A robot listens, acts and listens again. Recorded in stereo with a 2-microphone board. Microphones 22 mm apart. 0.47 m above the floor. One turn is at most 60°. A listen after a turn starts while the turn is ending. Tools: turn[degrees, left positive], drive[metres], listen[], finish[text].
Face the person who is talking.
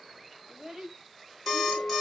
Thought: The child speaking: about 30° right or 150° right.
Action: turn[-30]
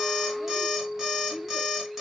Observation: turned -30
Action: listen[]
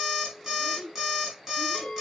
Thought: So it is at 115° right.
Action: turn[-60]
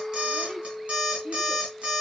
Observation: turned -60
Thought: Nothing new. It was at 55° right.
Action: turn[-55]
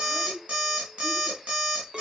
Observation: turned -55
Thought: The child speaking is now 25° right.
Action: turn[-25]
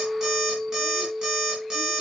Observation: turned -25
Action: listen[]
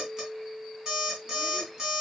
Action: listen[]
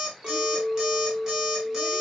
Action: finish[I heard a child speaking from this way, but can't make it out now.]